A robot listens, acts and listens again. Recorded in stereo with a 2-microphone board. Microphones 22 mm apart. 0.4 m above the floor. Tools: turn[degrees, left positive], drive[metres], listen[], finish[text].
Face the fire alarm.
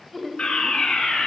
Thought: The fire alarm: about 60° left or 120° left.
Action: turn[60]
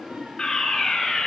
Thought: So it is at 45° left.
Action: turn[45]
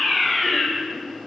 Action: finish[Found it: a fire alarm, straight ahead.]